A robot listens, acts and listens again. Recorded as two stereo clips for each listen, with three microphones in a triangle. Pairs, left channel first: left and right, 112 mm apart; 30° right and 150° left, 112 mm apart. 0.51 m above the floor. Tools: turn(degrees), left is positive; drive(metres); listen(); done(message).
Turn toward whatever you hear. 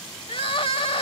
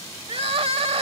turn(degrees=120)
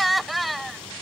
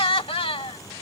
done("Facing the crying.")